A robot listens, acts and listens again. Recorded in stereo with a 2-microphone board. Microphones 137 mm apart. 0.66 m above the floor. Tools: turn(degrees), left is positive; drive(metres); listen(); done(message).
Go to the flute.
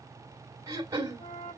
turn(degrees=70)
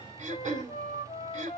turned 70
turn(degrees=35)
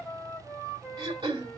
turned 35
drive(metres=1.0)
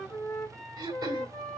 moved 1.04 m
drive(metres=1.0)
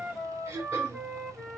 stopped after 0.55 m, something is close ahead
done("I am next to the flute.")